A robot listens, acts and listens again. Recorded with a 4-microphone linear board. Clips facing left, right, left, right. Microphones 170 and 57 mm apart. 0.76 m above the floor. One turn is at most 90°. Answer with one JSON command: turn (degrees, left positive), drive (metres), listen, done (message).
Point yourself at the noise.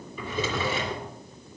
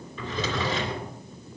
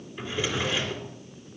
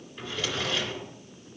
{"turn": 30}
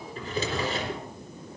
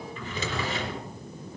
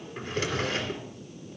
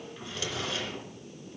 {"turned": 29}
{"turn": 90}
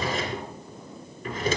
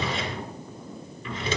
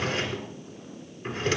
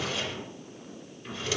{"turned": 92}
{"turn": 50}
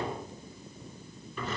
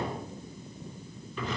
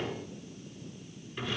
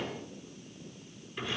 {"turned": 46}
{"done": "Found it: a drawer, straight ahead."}